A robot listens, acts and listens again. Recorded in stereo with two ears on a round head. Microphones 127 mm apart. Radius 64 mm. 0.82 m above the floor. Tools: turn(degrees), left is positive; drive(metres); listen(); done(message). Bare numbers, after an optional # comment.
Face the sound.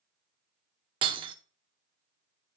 # The breaking glass: about 35° right or 145° right.
turn(-35)
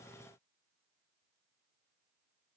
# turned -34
listen()
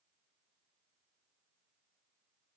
done("I heard breaking glass, but can't make it out now. It was about straight ahead or 110° right.")